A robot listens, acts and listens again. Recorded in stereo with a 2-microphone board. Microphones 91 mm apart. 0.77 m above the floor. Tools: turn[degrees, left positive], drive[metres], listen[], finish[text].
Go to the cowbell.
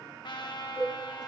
Thought: The cowbell: about 20° left or 160° left.
Action: turn[20]
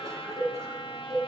Action: drive[1.0]
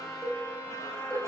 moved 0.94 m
Action: drive[1.0]
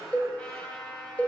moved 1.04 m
Thought: The cowbell is now 15° left.
Action: turn[15]
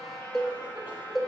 Action: drive[1.0]
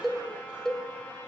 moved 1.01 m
Action: drive[1.0]
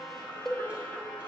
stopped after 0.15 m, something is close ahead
Action: finish[I am next to the cowbell.]